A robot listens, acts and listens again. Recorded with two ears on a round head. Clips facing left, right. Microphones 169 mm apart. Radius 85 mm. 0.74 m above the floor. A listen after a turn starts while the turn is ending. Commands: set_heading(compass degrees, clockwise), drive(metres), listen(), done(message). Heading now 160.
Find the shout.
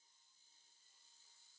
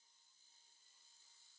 listen()
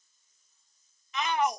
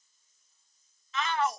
set_heading(145)
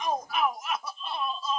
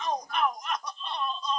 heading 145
done("Facing the shout.")